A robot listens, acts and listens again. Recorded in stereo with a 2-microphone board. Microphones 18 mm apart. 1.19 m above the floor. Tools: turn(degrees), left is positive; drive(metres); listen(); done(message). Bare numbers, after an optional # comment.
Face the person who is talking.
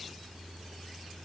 listen()
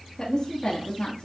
# The woman speaking: about 40° left or 140° left.
turn(40)
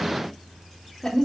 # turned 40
# So it is at 15° left.
turn(15)
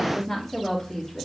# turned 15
done("Found it: a woman speaking, straight ahead, 2 to 4 m away.")